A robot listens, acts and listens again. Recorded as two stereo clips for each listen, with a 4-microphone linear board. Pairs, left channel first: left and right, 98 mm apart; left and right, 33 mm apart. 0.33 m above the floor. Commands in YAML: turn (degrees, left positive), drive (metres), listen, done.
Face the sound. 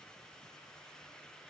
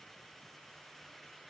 listen: true
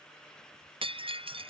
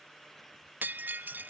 turn: -70
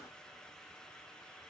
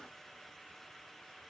listen: true
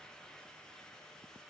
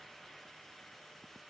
done: "I heard breaking glass, but can't make it out now. It was about straight ahead or 40° right."